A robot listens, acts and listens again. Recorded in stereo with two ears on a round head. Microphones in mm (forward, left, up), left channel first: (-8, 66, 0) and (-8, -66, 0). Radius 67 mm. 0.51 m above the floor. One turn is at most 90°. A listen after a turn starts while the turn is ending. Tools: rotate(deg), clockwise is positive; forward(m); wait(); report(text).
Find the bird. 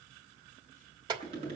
wait()
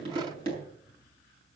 wait()
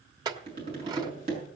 report("I can't make out a bird, only a clink and tapping.")